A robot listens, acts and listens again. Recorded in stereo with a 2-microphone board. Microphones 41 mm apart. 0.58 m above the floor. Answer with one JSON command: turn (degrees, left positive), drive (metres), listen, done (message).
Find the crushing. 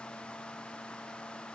{"listen": true}
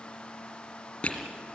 {"turn": 30}
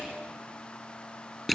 {"done": "Facing the crushing."}